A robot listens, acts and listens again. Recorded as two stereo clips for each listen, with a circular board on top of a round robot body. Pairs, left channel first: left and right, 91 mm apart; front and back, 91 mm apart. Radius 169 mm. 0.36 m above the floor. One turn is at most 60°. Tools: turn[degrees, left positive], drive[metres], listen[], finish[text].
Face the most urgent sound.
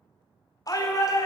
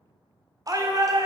Thought: The shout: 135° left.
Action: turn[60]
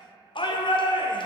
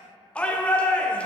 Thought: The shout is now 75° left.
Action: turn[60]
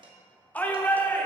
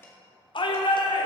Thought: The shout is now 15° left.
Action: turn[15]
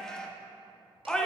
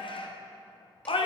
Action: finish[Facing the shout.]